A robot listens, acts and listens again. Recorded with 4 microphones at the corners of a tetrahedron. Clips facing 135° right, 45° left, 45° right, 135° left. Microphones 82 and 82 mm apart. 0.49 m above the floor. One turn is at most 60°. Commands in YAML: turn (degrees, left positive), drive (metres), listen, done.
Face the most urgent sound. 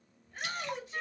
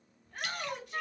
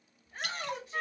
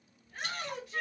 turn: 15
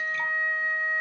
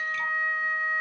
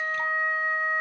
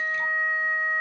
listen: true
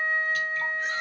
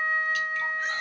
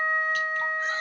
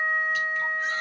listen: true
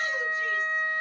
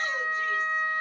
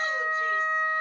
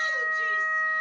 done: "Facing where the shout came from. I can't hear it now."